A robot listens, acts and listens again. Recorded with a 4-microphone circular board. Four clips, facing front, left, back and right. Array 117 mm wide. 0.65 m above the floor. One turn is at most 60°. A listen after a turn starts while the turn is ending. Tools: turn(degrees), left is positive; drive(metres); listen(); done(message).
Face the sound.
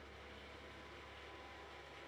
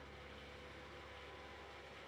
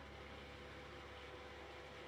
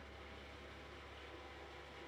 listen()
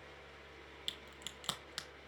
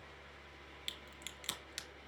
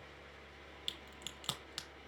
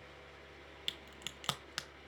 turn(degrees=-60)
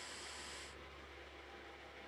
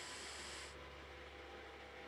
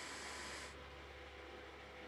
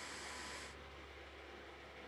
turn(degrees=-30)
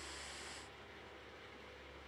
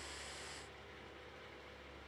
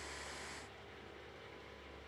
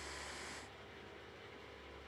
done("Facing where the crack came from. I can't hear it now.")